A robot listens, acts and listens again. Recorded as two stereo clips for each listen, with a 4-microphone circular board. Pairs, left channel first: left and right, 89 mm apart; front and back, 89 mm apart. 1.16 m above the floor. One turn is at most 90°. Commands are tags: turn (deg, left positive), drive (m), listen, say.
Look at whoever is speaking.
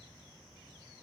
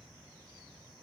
<listen/>
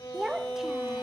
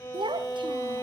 <turn deg="-90"/>
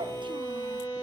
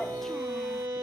<turn deg="-85"/>
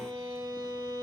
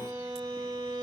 <listen/>
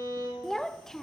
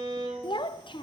<say>Facing the child speaking.</say>